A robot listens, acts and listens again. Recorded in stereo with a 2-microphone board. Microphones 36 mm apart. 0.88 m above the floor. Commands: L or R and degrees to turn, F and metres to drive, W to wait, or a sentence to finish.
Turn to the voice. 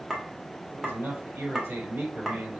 R90
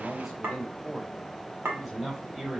R10
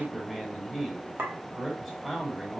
Facing the man speaking.